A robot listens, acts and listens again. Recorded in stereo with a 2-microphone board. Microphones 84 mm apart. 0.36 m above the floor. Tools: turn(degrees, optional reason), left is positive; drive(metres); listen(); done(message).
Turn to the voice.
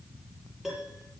listen()
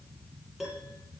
listen()
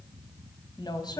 turn(degrees=55, reason="The woman speaking: about 55° left or 125° left.")
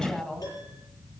done("Found it: a woman speaking, straight ahead, 2 to 4 m away.")